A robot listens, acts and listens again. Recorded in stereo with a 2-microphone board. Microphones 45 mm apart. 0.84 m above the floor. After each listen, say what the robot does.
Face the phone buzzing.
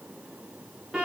Keep listening.
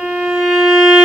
Keep listening.
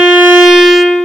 I can't make out a phone buzzing to turn to.